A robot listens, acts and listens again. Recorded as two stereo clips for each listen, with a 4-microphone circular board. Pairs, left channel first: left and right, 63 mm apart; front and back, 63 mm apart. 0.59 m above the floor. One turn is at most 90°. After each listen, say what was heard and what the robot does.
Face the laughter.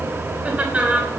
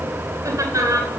The laughter: 160° right. Turn 90° right.
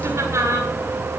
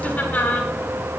The laughter is now 60° right. Turn 60° right.
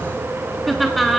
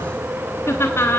Facing the laughter, 1 to 2 m away.